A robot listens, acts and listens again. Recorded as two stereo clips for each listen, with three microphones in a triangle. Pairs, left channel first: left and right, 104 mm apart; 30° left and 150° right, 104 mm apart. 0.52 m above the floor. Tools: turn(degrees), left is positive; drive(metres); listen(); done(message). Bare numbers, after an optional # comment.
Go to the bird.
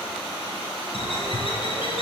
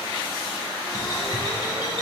# The bird: 80° left.
turn(80)
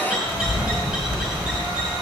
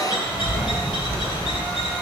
drive(1.0)
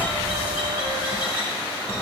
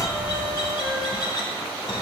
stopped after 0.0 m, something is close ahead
# The bird is now 10° right.
turn(-10)
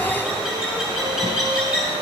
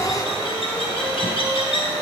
done("Blocked. The bird is further on, straight ahead.")